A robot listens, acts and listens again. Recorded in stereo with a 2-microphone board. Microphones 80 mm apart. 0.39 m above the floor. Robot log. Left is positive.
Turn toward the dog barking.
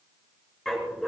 cmd yaw +30
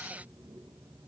cmd idle
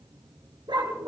note: So it is at 75° right.
cmd yaw -75
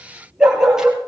note: The dog barking is now 10° right.
cmd yaw -10
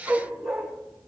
end: Facing the dog barking, 2 to 4 m away.